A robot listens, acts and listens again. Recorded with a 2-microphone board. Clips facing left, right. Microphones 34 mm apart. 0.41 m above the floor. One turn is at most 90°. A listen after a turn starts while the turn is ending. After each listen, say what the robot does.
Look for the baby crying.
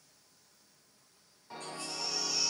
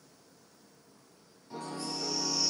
Turn 65° left.
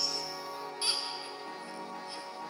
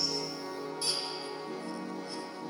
Keep listening.
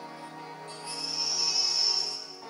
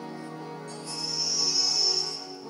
Turn 40° left.
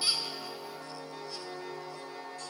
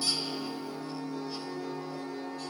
Keep listening.
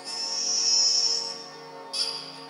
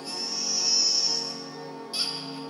Found it: a baby crying, straight ahead.